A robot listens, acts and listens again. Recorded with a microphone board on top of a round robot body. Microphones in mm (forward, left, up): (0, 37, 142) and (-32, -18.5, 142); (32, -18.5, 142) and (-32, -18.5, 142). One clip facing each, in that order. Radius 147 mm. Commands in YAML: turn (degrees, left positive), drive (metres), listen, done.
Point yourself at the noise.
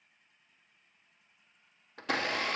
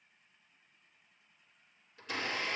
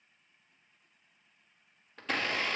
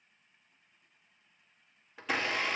turn: 95
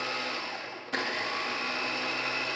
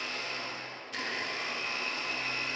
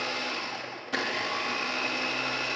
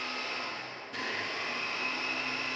turn: 20
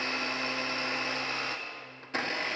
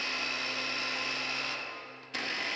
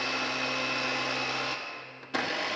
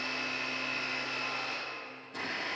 done: "Facing the blender."